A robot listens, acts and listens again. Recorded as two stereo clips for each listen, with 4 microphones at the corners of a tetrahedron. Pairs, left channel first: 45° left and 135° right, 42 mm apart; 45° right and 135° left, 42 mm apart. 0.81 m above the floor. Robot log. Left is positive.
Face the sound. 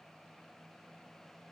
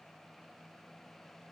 cmd idle
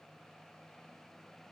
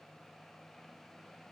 cmd idle
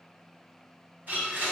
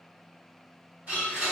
note: The blender: 175° right.
cmd yaw -175
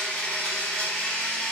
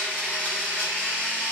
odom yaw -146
note: The blender is now 30° right.
cmd yaw -30
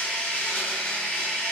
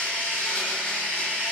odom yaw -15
note: The blender is now 15° right.
cmd yaw -15
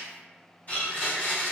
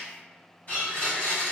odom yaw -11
end: Facing the blender, 1 to 2 m away.